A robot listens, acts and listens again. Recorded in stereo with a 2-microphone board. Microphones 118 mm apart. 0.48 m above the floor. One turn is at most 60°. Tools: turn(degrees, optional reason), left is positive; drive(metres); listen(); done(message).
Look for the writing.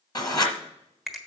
turn(degrees=35, reason="The writing: about 35° left or 145° left.")
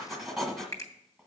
done("Found it: writing, straight ahead.")